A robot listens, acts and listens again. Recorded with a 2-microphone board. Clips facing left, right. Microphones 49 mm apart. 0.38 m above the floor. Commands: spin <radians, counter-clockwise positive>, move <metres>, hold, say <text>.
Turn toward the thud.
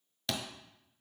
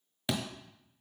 spin -0.26
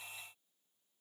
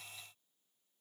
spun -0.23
hold
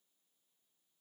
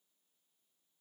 say I heard a thud, but can't make it out now. It was about 5° right or 150° right.